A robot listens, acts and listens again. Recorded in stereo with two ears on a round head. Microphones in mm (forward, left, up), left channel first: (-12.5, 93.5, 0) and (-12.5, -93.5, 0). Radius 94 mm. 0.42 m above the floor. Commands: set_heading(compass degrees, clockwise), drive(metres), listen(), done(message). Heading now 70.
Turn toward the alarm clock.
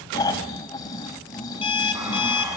set_heading(45)
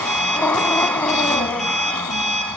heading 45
done("Facing the alarm clock, over 4 m away.")